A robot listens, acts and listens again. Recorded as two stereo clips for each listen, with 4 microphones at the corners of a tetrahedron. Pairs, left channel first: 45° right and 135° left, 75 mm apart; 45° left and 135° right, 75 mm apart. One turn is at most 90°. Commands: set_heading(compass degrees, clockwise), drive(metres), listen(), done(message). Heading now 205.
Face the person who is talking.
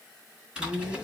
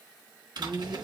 set_heading(115)
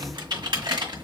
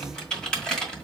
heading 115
set_heading(25)
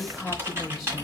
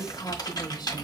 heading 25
set_heading(340)
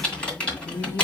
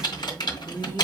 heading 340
done("Found it: a woman speaking, straight ahead.")